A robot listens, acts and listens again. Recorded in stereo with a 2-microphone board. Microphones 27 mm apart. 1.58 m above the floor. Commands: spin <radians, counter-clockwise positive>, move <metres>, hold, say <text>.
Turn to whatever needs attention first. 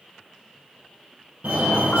spin -1.22
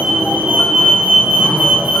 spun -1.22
spin -0.70
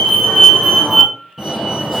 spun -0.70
say Facing the fire alarm.